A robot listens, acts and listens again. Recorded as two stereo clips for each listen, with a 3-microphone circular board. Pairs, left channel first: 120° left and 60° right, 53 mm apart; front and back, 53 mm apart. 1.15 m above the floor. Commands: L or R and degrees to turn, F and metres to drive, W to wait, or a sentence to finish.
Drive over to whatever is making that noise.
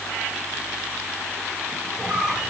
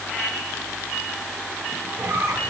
R135
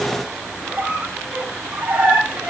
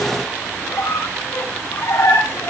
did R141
F1.0
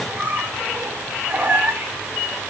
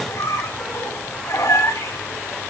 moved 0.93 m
F1.0
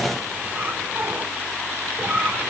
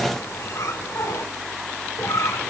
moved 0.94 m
F1.0
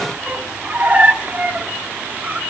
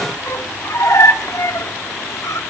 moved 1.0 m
F1.0
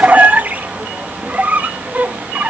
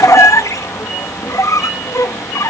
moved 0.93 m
F1.0
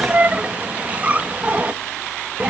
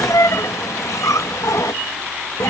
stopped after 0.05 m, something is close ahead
Arrived at the squeak, straight ahead.